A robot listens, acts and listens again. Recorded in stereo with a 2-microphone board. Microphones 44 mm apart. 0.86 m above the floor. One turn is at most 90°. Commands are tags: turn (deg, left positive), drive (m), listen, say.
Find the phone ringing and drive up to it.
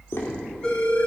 <turn deg="20"/>
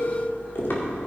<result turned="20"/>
<listen/>
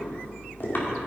<listen/>
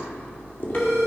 <drive m="1.0"/>
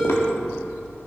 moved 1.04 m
<drive m="1.0"/>
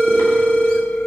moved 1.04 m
<drive m="1.0"/>
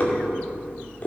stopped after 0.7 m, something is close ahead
<listen/>
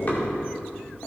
<listen/>
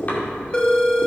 <turn deg="20"/>
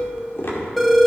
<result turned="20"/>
<say>Arrived at the phone ringing, straight ahead.</say>